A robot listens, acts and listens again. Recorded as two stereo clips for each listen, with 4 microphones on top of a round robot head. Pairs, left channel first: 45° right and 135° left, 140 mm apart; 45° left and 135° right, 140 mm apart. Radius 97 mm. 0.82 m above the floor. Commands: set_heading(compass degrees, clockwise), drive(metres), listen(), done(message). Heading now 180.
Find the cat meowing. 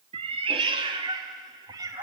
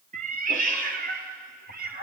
set_heading(335)
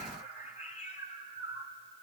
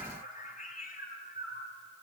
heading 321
set_heading(311)
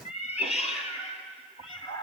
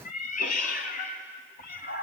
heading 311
set_heading(296)
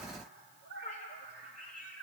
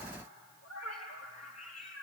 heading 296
done("Found it: a cat meowing, straight ahead.")